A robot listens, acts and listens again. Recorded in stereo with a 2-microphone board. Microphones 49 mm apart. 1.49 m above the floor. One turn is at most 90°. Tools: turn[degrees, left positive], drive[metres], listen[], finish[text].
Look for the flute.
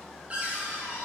Action: listen[]
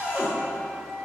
Thought: The flute: about 25° right or 155° right.
Action: turn[-25]
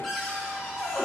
Action: listen[]
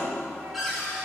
Action: listen[]
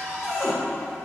Action: finish[I heard a flute, but can't make it out now. It was about straight ahead or 130° right.]